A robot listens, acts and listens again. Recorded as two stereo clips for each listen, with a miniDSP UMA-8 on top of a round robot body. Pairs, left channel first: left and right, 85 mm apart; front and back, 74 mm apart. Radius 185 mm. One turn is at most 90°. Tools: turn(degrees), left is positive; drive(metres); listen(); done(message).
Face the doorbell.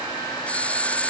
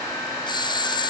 turn(degrees=15)
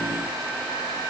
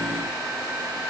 listen()
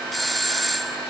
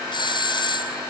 done("Found it: a doorbell, straight ahead.")